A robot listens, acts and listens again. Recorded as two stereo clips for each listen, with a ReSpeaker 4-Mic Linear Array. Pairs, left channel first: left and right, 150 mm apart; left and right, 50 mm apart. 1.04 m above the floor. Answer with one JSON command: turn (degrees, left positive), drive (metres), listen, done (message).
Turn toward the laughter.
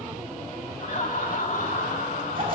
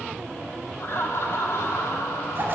{"turn": 70}
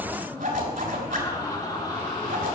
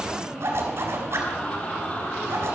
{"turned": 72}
{"turn": 25}
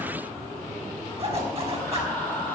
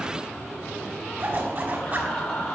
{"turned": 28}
{"turn": 10}
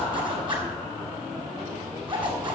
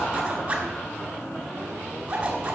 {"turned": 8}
{"listen": true}
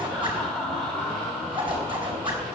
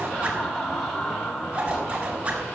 {"done": "Found it: laughter, straight ahead."}